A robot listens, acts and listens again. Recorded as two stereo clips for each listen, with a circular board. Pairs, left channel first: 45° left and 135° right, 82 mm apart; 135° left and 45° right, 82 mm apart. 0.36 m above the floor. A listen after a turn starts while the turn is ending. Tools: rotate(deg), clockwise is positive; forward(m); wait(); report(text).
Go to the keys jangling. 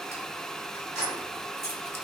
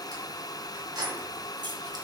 rotate(15)
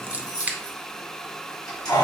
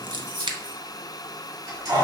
forward(1.0)
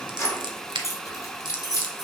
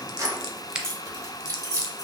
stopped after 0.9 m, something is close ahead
report("Arrived at the keys jangling, straight ahead.")